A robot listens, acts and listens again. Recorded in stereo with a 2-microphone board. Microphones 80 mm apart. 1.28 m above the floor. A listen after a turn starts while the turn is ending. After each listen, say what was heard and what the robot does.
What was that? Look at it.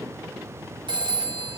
Turn 90° right.
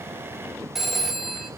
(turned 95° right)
Facing the phone ringing, 2 to 4 m away.